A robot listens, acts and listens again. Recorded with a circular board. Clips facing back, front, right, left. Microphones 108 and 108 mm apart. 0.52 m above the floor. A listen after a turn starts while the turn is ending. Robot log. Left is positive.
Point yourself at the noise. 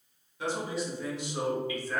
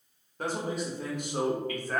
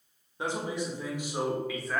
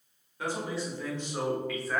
note: The man speaking: 10° left.
cmd yaw +10
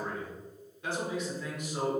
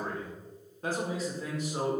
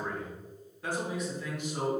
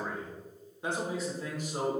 note: The man speaking is now 55° left.
cmd yaw +55
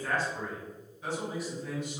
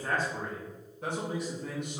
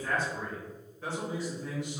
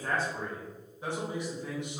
note: The man speaking is now 25° left.
cmd yaw +25
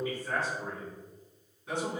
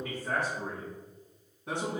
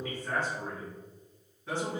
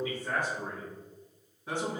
note: The man speaking is now 15° left.
cmd yaw +15
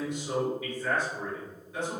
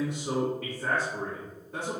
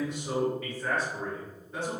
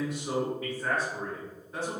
end: Facing the man speaking.